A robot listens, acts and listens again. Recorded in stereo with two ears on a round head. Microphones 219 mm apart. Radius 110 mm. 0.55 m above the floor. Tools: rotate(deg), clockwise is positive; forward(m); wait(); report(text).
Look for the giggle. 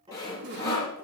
rotate(55)
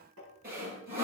wait()
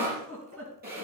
rotate(65)
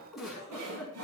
report("Facing the giggle.")